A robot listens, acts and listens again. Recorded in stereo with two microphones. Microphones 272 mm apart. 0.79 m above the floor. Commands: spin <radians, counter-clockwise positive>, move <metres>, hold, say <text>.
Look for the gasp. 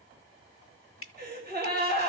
spin -0.70
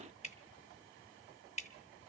hold
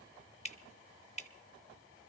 say I heard a gasp, but can't make it out now. It was about straight ahead or 100° right.